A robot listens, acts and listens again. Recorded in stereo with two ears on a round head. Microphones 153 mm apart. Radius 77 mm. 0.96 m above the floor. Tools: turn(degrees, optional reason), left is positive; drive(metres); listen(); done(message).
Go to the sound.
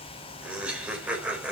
turn(degrees=-30)
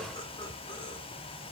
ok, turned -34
listen()
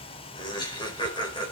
turn(degrees=25, reason="So it is at 25° left.")
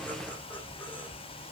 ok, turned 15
turn(degrees=10, reason="Nothing new. It was at 10° left.")
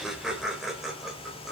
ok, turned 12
drive(metres=1.0)
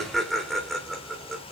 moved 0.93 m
drive(metres=1.0)
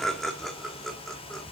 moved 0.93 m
drive(metres=1.0)
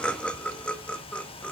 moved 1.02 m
drive(metres=1.0)
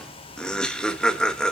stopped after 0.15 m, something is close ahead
done("I am next to the laughter.")